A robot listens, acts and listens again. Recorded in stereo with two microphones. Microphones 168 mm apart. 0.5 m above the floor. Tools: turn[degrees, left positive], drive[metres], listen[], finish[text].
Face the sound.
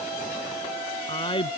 Thought: The man speaking: about 30° left or 150° left.
Action: turn[30]
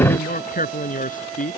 Thought: So it is at 130° left.
Action: turn[130]
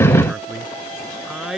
Action: finish[Facing the man speaking.]